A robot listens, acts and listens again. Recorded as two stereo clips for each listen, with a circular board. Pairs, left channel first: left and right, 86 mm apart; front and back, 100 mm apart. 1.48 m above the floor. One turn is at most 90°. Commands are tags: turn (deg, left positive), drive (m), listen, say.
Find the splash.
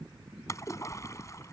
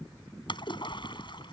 <turn deg="35"/>
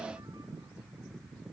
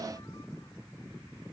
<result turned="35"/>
<say>Facing where the splash came from. I can't hear it now.</say>